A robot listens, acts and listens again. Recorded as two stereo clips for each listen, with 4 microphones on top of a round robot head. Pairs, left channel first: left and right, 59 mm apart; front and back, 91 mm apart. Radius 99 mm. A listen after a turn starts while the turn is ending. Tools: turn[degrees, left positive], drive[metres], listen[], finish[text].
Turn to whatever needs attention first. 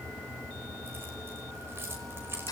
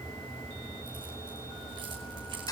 Action: listen[]
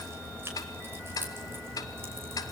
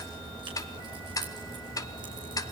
Action: listen[]
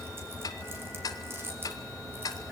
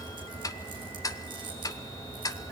Action: finish[I can't make out anything urgent to turn to.]